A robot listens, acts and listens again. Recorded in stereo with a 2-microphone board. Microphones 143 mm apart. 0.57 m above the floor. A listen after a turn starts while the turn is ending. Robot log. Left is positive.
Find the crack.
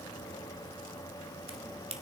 note: The crack: about 40° right or 140° right.
cmd yaw -40
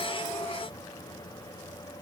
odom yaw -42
cmd idle
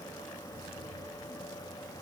end: I heard a crack, but can't make it out now. It was about straight ahead or 95° right.